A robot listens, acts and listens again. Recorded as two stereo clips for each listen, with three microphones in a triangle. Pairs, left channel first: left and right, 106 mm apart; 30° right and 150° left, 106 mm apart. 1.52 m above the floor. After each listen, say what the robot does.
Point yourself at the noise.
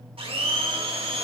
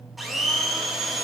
Turn 120° right.
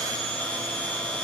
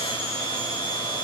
Turn 10° left.
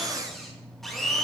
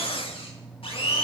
Found it: a blender, straight ahead, 1 to 2 m away.